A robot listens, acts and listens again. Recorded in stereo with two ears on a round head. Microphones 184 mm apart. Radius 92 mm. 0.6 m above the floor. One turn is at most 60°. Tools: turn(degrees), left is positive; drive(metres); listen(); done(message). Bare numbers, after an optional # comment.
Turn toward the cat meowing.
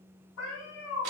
# The cat meowing: about 65° left or 115° left.
turn(60)
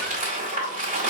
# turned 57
listen()
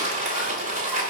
listen()
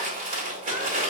done("I heard a cat meowing, but can't make it out now. It was about 10° left or 55° left.")